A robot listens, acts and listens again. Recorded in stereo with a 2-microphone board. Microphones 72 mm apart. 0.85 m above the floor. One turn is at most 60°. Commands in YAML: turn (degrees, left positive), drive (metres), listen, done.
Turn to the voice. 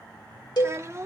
turn: -40
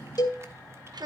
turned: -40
turn: -60
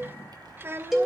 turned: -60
turn: -30
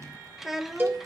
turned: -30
done: "Facing the child speaking."